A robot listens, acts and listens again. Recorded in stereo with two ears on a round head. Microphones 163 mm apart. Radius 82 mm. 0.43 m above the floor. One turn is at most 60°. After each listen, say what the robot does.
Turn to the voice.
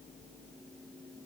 Keep listening.
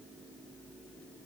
Keep listening.
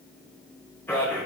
Turn 30° left.
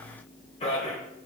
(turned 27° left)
Turn 60° left.
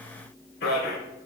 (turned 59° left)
Turn 60° left.
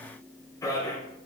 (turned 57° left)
Turn 20° left.
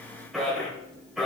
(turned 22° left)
Facing the man speaking, 1 to 2 m away.